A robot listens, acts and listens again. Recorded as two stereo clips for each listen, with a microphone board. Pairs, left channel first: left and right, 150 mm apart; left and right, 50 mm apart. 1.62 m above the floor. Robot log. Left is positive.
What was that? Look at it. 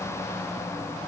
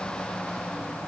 cmd idle
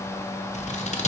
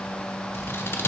note: The scissors: about 50° left or 130° left.
cmd yaw +50
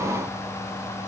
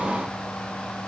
cmd idle
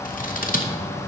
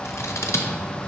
note: So it is at 75° left.
cmd yaw +75
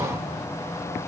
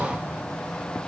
cmd idle
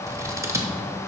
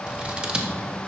note: The scissors is now 20° right.
cmd yaw -20
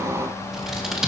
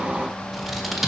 end: Found it: scissors, straight ahead.